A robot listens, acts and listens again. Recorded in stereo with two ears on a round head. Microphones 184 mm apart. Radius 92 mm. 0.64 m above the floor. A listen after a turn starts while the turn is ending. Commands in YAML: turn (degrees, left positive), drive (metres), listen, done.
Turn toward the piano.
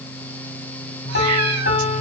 turn: 45
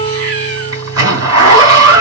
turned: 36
listen: true
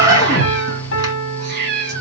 turn: 90
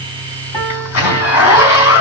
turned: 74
turn: 15
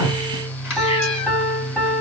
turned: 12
done: "Found it: a piano, straight ahead, 1 to 2 m away."